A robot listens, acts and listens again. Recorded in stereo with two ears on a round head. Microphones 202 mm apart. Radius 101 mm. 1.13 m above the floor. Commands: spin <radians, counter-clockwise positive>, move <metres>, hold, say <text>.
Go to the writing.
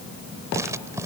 spin -0.52
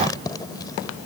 spin 0.26
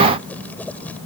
move 1.0
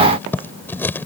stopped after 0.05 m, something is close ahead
spin 0.17
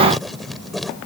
say Blocked. The writing is further on, straight ahead.